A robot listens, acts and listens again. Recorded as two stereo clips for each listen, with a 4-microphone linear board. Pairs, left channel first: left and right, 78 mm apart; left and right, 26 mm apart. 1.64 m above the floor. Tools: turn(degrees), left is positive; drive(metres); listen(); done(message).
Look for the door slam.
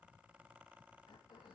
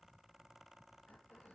listen()
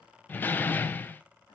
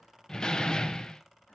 turn(degrees=25)
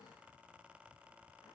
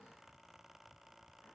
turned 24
listen()
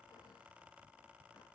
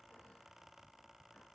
done("I heard a door slam, but can't make it out now. It was about straight ahead or 130° left.")